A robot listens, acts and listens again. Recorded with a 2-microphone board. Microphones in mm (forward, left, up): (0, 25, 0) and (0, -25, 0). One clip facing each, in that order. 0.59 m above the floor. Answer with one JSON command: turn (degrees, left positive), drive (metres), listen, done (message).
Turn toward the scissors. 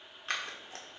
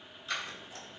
{"turn": 50}
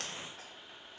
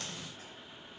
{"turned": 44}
{"listen": true}
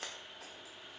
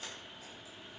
{"turn": 75}
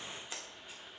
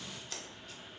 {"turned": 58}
{"turn": 20}
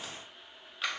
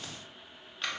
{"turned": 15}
{"done": "Found it: scissors, straight ahead, under 1 m away."}